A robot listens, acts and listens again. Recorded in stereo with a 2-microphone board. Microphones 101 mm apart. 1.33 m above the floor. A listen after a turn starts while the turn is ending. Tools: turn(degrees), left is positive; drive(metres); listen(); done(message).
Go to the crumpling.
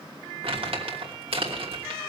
turn(degrees=-70)
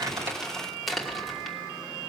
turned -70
drive(metres=1.0)
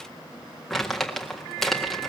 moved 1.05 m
drive(metres=1.0)
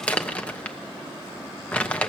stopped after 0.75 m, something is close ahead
turn(degrees=15)
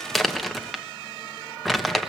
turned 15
done("Arrived at the crumpling, straight ahead.")